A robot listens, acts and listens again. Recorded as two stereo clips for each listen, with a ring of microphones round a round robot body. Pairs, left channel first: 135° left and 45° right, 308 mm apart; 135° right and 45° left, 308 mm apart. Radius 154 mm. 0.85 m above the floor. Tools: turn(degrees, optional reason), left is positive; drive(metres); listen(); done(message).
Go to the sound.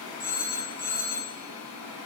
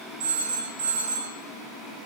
turn(degrees=75, reason="The phone ringing: 75° left.")
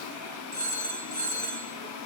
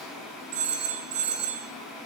turn(degrees=15, reason="The phone ringing is now 15° left.")
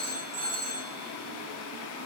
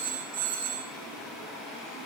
drive(metres=1.0)
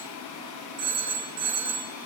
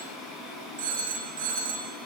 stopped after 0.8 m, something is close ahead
done("Something is in my way. I am facing the phone ringing but have not reached it.")